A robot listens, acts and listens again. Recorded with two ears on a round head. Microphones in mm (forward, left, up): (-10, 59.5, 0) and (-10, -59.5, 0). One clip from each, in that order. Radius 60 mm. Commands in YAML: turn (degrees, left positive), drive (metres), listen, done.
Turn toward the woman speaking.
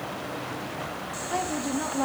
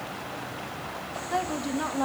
turn: -20
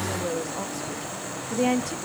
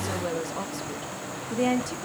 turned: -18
turn: 30
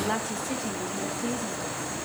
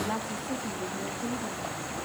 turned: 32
turn: 125
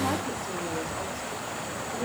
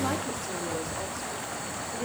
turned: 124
turn: -15
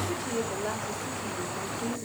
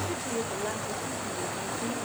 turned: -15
done: "Found it: a woman speaking, straight ahead."